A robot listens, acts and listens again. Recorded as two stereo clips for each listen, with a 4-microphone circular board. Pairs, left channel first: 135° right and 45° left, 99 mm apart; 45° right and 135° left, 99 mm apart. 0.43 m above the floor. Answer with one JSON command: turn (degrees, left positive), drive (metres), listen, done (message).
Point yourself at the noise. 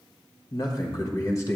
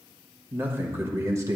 {"turn": 175}
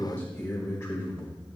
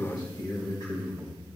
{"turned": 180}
{"turn": -85}
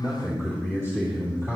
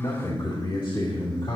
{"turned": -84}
{"turn": -15}
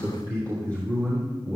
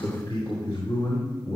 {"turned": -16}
{"done": "Facing the man speaking, 2 to 4 m away."}